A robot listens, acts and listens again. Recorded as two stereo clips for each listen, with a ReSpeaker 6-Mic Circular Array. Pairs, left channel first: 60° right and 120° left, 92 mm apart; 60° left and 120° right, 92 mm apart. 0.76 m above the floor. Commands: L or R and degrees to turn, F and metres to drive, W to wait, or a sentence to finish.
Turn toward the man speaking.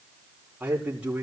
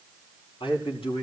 L40
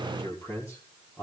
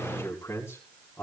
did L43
Found it: a man speaking, straight ahead, over 4 m away.